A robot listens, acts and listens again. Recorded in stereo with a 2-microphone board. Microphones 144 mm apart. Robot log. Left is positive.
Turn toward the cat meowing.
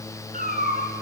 note: The cat meowing: about 65° right or 115° right.
cmd yaw -65
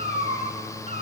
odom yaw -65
note: So it is at 50° right.
cmd yaw -50
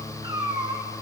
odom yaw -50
note: The cat meowing is now 30° right.
cmd yaw -30
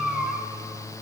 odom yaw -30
end: Facing the cat meowing.